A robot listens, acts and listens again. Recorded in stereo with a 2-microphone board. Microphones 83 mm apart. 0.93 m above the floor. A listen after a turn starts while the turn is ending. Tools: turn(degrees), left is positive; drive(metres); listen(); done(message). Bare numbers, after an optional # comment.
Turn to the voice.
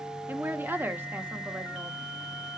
# The woman speaking: about 25° right or 155° right.
turn(-25)
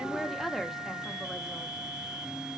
done("Facing the woman speaking.")